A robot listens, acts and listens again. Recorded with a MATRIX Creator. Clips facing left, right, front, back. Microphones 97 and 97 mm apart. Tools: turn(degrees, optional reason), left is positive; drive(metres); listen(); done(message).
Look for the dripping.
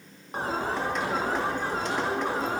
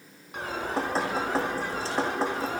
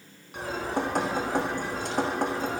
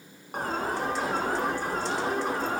turn(degrees=-35, reason="The dripping: 35° right.")
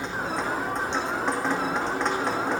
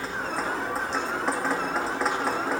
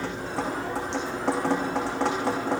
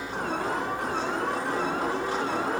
done("Found it: dripping, straight ahead, over 4 m away.")